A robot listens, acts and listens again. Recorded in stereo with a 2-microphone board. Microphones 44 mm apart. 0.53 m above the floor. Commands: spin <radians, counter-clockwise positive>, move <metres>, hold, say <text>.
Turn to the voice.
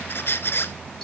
hold
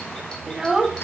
spin -0.52
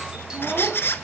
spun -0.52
hold
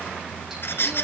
hold
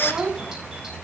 spin -2.44
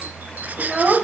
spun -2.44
spin -0.35
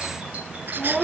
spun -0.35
say Facing the child speaking.